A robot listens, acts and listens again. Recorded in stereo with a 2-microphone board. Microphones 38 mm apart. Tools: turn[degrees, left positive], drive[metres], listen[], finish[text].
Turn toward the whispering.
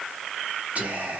Thought: The whispering: about 40° right or 140° right.
Action: turn[-40]
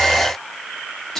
Action: finish[Facing the whispering, 1 to 2 m away.]